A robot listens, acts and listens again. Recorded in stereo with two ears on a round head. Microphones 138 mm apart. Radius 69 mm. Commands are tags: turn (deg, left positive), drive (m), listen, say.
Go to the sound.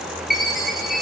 <turn deg="30"/>
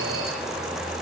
<listen/>
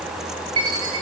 <turn deg="-30"/>
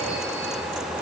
<listen/>
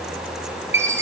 <turn deg="-15"/>
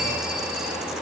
<listen/>
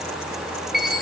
<drive m="1.0"/>
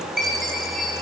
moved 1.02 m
<drive m="1.0"/>
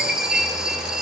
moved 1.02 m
<drive m="1.0"/>
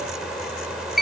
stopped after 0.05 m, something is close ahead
<say>I am next to the chime.</say>